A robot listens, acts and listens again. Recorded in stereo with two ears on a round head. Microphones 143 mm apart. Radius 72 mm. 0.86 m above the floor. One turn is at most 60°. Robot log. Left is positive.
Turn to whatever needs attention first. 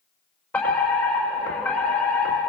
cmd yaw +30
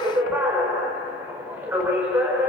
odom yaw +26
note: So it is at 15° right.
cmd yaw -15
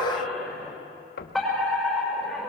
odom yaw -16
end: Found it: a fire alarm, straight ahead, over 4 m away.